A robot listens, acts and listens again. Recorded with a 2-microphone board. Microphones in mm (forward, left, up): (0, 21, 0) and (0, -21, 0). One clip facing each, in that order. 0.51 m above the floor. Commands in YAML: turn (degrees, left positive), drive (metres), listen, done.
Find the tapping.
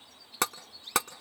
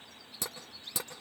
turn: 90
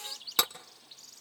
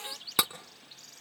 done: "Facing the tapping."